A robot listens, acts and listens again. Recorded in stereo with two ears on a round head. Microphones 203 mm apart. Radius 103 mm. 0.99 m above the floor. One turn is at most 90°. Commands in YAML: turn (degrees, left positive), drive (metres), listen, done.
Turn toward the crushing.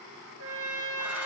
listen: true
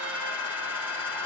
listen: true
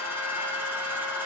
done: "I can't make out crushing to turn to."